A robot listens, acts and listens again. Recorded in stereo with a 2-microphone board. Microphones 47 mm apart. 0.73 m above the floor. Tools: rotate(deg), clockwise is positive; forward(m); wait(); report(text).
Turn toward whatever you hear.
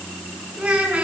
rotate(20)
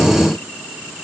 wait()
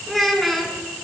report("Found it: a child speaking, straight ahead.")